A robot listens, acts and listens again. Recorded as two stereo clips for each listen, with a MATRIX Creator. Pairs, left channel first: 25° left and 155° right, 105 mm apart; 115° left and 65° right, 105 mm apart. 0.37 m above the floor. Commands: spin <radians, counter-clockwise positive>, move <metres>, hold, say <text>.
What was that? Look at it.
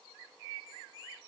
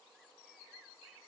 hold
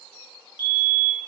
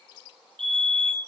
spin 0.61
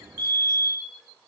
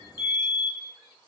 spin -0.26
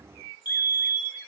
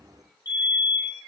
say Found it: a fire alarm, straight ahead.